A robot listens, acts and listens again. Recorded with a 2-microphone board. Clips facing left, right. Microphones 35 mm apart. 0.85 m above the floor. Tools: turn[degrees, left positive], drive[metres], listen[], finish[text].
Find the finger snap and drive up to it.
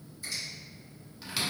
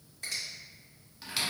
Thought: The finger snap: about 55° right or 125° right.
Action: turn[-55]
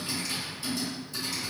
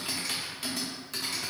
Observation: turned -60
Action: listen[]
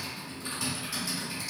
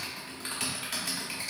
Action: listen[]
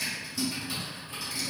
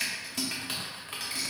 Action: finish[I heard a finger snap, but can't make it out now. It was about 5° left or 65° right. I did not reach it.]